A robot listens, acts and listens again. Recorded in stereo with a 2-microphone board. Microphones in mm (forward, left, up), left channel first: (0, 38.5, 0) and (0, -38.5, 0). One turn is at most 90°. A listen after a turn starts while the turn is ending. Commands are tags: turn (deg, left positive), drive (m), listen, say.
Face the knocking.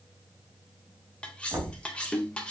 <turn deg="-65"/>
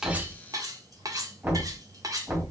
<turn deg="-35"/>
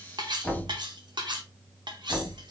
<say>Found it: knocking, straight ahead, 2 to 4 m away.</say>